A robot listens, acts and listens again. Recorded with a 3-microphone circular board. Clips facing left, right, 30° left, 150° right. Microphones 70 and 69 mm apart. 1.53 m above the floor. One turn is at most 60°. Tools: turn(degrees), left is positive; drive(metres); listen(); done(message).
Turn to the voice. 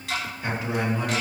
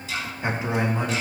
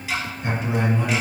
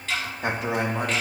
turn(degrees=-60)
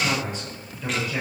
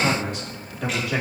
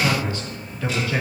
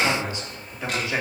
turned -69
turn(degrees=-60)
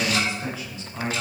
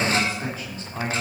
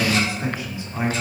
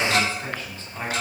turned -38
turn(degrees=-45)
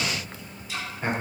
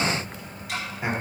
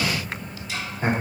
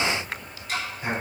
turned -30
turn(degrees=-10)
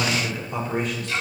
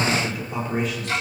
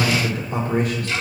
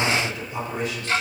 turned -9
done("Facing the man speaking.")